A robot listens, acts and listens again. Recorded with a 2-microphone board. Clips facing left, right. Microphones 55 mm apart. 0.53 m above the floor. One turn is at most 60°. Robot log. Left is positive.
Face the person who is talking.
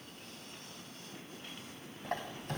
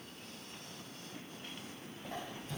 cmd idle
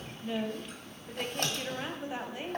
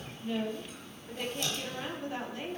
note: The woman speaking: about 15° left or 165° left.
cmd yaw +15
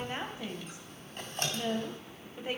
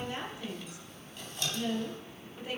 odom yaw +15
note: So it is at 150° left.
cmd yaw +60
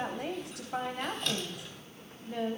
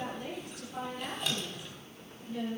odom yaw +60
note: The woman speaking is now 100° left.
cmd yaw +60
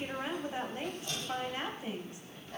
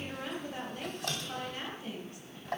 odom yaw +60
note: The woman speaking is now 25° left.
cmd yaw +25
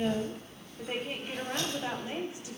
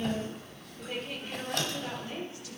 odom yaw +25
note: The woman speaking is now 25° left.
cmd yaw +25
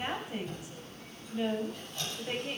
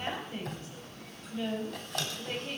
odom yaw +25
note: The woman speaking is now 15° left.
cmd yaw +15
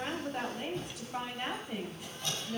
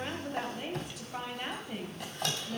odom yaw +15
end: Facing the woman speaking.